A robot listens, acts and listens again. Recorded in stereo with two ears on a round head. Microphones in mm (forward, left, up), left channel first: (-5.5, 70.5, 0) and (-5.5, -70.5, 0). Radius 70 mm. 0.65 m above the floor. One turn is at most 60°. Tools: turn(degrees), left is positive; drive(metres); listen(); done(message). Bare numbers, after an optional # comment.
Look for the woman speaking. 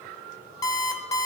listen()
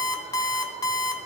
listen()
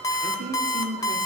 # The woman speaking: about 60° right or 120° right.
turn(-60)
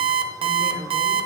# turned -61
# So it is at 15° left.
turn(15)
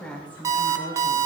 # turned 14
# The woman speaking is now 15° left.
turn(15)
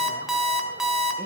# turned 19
listen()
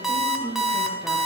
done("Found it: a woman speaking, straight ahead.")